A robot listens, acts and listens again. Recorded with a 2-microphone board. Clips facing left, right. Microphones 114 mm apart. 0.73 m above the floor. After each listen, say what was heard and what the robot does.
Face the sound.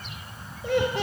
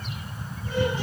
Turn 90° left.
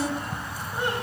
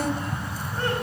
Keep listening.
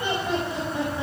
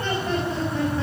The laughter is now 15° left. Turn 15° left.
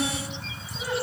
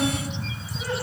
Found it: laughter, straight ahead, over 4 m away.